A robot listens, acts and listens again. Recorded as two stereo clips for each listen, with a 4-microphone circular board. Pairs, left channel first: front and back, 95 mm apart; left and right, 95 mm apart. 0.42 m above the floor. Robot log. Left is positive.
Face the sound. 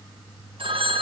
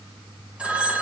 note: The phone ringing: 170° right.
cmd yaw -170
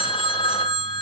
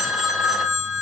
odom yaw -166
end: Found it: a phone ringing, straight ahead.